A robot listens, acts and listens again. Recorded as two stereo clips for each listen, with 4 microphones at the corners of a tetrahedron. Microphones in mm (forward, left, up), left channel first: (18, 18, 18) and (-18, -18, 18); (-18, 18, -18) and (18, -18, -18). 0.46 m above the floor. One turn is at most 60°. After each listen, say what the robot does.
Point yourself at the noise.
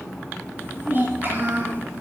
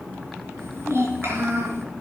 Turn 60° right.
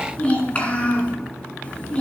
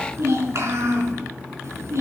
Turn 20° right.
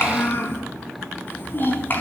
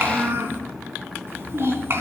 Facing the child speaking, 2 to 4 m away.